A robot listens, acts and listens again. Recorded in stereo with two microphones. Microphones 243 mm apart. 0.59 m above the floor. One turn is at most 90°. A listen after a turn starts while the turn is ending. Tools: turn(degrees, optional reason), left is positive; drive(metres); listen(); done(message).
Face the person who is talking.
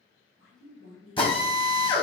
turn(degrees=60, reason="The woman speaking: about 60° left or 120° left.")
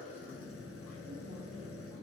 listen()
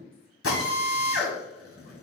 turn(degrees=40, reason="So it is at 40° left.")
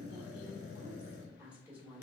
done("Facing the woman speaking, 1 to 2 m away.")